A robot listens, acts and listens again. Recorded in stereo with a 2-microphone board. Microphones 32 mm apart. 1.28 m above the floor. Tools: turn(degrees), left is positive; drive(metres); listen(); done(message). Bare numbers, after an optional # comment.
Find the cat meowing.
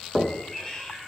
# The cat meowing: about 30° left or 150° left.
turn(30)
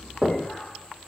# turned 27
listen()
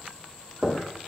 listen()
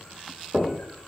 done("I heard a cat meowing, but can't make it out now. It was about straight ahead or 125° left.")